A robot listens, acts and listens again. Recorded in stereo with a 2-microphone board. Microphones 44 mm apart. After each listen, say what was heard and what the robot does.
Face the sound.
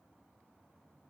Keep listening.
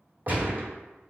The gunshot: about 40° right or 140° right. Turn 40° right.
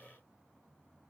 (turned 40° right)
Keep listening.
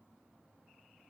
I heard a gunshot, but can't make it out now. It was about straight ahead or 100° right.